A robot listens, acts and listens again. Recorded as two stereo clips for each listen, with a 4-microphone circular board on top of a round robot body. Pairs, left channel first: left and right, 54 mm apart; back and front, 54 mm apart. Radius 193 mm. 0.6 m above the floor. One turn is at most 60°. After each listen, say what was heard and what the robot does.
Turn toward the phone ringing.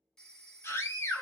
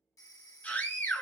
The phone ringing: 170° left. Turn 60° left.
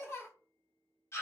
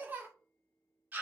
Nothing new. It was at 110° left. Turn 60° left.
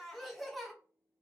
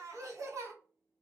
Nothing new. It was at 50° left. Turn 50° left.
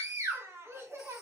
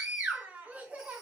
Facing where the phone ringing came from. I can't hear it now.